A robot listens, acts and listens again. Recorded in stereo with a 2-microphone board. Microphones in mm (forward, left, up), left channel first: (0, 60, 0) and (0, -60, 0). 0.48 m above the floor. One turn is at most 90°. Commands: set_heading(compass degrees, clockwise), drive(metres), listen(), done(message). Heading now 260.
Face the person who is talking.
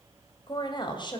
set_heading(220)
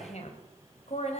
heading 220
set_heading(130)
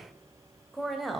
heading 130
done("Found it: a woman speaking, straight ahead.")